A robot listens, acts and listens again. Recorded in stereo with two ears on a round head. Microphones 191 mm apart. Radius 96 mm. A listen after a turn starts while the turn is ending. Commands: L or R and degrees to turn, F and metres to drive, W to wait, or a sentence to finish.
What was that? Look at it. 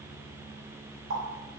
R45
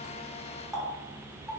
Found it: a running tap, straight ahead, 1 to 2 m away.